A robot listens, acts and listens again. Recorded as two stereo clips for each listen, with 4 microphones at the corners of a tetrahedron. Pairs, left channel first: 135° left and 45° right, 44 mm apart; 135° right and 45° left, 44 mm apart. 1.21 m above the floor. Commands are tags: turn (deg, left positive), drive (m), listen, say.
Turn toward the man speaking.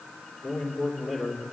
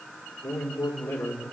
<turn deg="-115"/>
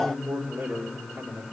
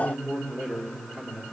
<say>Facing the man speaking, over 4 m away.</say>